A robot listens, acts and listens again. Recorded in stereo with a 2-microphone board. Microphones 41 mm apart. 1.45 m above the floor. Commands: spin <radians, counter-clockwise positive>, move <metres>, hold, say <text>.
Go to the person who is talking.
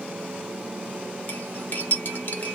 hold
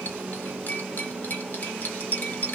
hold
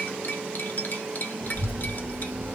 spin -1.31
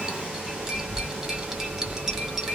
spin -0.35
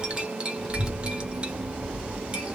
move 1.0
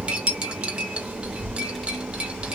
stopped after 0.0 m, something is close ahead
say Blocked. The child speaking is further on, straight ahead.